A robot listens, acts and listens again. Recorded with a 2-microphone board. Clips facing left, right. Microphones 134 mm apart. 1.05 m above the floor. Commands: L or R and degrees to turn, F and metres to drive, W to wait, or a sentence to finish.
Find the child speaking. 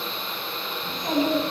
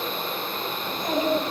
L35
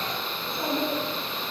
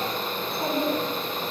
R10
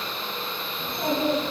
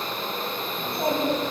R15
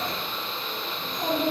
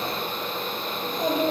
R15
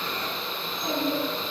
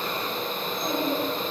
Facing the child speaking.